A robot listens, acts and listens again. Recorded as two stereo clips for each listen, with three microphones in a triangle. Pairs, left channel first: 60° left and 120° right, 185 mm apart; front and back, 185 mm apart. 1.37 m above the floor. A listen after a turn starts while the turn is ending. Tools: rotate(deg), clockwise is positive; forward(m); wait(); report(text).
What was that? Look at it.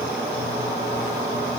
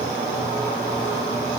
wait()
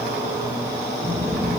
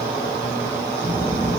rotate(-45)
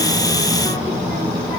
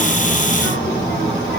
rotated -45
report("Facing the child speaking.")